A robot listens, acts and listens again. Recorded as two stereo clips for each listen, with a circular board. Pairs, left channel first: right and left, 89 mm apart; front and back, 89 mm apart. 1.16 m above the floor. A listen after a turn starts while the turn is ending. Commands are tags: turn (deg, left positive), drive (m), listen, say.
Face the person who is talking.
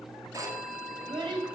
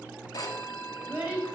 <turn deg="115"/>
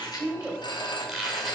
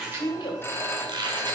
<turn deg="15"/>
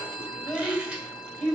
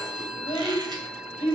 <say>Found it: a child speaking, straight ahead.</say>